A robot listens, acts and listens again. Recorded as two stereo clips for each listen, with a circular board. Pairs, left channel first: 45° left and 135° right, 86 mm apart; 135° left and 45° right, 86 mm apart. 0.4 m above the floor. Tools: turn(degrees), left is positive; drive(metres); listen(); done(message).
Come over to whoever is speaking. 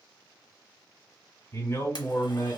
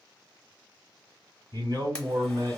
turn(degrees=-15)
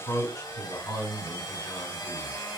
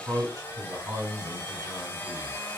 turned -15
drive(metres=1.0)
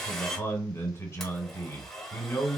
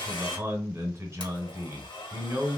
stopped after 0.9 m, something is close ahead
done("Arrived at the man speaking, straight ahead.")